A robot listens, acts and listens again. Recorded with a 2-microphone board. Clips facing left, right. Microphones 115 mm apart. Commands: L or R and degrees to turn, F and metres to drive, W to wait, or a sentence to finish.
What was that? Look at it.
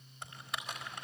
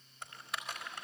L30
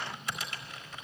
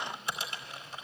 R30
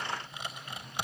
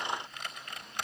L10
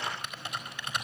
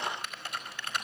Facing the typing on a keyboard.